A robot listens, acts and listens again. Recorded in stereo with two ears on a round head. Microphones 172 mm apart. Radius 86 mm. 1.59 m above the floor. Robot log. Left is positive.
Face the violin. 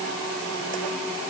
cmd idle
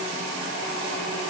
cmd idle
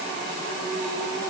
end: I can't make out a violin.